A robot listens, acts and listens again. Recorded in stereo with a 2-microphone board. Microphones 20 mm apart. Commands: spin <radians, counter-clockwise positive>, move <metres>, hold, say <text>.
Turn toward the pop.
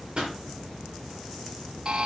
spin -0.79
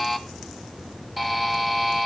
hold
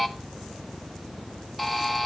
say I heard a pop, but can't make it out now. It was about straight ahead or 90° right.